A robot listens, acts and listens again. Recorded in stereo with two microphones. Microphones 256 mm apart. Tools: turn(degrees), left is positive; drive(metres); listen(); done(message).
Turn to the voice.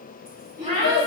turn(degrees=-70)
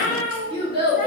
turn(degrees=-20)
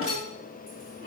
listen()
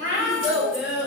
done("Facing the child speaking, 1 to 2 m away.")